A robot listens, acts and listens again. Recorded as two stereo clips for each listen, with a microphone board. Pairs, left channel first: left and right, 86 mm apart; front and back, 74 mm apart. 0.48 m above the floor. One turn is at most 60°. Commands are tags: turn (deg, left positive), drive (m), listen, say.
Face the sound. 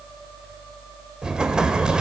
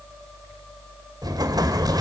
<turn deg="-60"/>
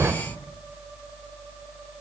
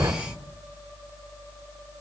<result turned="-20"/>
<turn deg="-60"/>
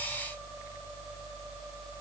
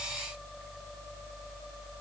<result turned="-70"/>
<turn deg="-60"/>
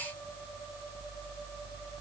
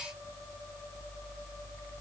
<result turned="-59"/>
<turn deg="-20"/>
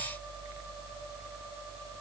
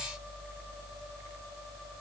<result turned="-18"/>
<say>I heard an explosion from this way, but can't make it out now.</say>